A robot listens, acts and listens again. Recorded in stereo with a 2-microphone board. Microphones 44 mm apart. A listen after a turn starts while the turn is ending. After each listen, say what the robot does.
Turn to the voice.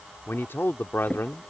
Turn 60° left.
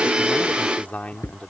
Turn 40° left.
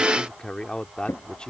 Turn 20° left.
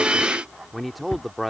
Facing the man speaking.